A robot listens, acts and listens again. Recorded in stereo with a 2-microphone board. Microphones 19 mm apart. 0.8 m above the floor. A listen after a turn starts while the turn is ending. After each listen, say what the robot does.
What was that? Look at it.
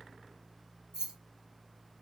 Turn 40° right.
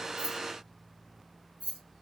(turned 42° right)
Turn 100° right.
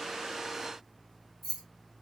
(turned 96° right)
Facing the keys jangling.